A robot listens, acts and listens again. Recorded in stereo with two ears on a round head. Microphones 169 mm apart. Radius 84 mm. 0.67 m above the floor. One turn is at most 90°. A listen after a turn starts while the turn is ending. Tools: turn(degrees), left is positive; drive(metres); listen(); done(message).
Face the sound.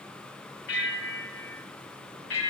turn(degrees=65)
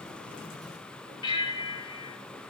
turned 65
turn(degrees=30)
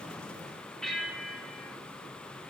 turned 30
done("Facing the bell.")